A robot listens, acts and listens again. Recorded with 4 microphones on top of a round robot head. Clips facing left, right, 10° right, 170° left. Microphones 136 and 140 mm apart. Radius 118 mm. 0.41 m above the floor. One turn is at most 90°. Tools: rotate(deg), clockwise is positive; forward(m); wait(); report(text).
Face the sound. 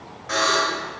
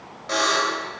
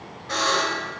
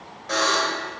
rotate(90)
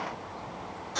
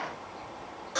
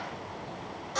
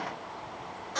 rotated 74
rotate(70)
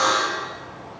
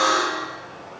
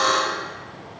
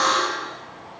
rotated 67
report("Found it: a buzzer, straight ahead, 1 to 2 m away.")